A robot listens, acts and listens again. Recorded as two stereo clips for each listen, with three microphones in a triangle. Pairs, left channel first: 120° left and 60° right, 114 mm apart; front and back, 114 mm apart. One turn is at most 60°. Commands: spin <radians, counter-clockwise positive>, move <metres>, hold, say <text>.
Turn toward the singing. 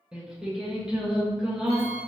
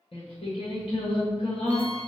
spin 0.44
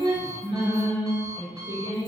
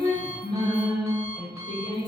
spin -0.26
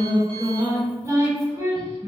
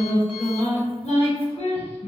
say Facing the singing, 1 to 2 m away.